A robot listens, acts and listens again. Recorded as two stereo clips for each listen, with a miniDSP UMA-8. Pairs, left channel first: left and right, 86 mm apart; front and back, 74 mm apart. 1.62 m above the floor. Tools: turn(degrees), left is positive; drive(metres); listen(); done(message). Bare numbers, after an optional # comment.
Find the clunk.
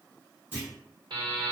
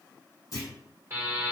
# The clunk: 25° right.
turn(-25)
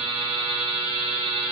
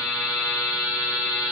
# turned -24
done("I heard a clunk from this way, but can't make it out now.")